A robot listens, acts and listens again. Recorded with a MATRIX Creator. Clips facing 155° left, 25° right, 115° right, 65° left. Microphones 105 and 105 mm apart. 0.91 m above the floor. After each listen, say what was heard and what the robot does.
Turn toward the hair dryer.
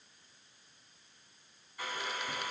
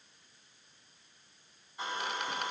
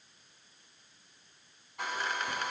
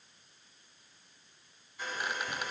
The hair dryer: 90° right. Turn 90° right.
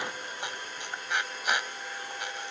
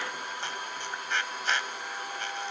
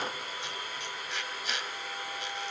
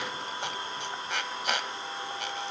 Facing the hair dryer.